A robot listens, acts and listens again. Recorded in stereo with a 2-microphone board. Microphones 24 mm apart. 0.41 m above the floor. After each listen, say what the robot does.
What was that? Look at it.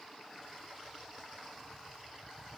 Keep listening.
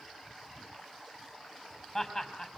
Turn 20° left.
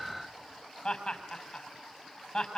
Turn 135° left.
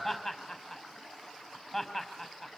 Found it: laughter, straight ahead.